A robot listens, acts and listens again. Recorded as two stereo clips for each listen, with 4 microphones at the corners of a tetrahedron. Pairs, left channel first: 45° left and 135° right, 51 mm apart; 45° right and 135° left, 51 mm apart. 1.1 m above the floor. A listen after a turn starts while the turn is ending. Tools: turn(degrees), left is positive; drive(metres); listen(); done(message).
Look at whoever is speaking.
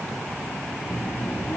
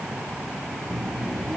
turn(degrees=50)
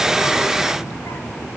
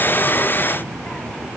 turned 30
turn(degrees=25)
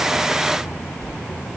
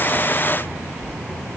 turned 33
done("Found it: a child speaking, straight ahead, 2 to 4 m away.")